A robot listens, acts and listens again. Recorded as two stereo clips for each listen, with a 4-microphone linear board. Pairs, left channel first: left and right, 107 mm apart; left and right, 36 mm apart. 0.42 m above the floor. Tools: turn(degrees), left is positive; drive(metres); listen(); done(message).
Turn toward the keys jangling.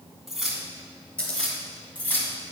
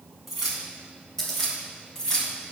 turn(degrees=20)
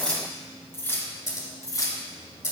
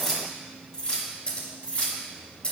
turn(degrees=35)
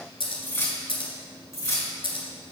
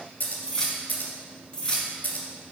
turn(degrees=30)
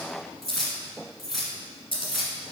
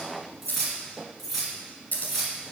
done("Facing the keys jangling, 2 to 4 m away.")